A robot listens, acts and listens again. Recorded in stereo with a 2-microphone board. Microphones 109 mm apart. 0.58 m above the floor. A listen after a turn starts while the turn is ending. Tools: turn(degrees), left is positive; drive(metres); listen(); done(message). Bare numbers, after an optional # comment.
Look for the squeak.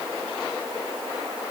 listen()
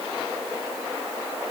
listen()
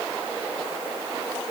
done("I can't make out a squeak.")